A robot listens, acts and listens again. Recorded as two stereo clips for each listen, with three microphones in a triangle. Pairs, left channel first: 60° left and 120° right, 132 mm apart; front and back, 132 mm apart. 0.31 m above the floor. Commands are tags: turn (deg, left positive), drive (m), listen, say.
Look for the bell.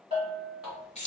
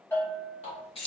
<turn deg="-75"/>
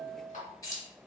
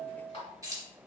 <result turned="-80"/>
<say>Found it: a bell, straight ahead.</say>